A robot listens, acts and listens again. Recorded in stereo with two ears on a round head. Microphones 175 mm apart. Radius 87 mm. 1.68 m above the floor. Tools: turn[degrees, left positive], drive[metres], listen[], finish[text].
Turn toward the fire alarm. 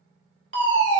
Thought: The fire alarm: about 70° right or 110° right.
Action: turn[-70]
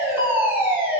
Thought: So it is at 10° right.
Action: turn[-10]
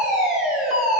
Action: finish[Facing the fire alarm.]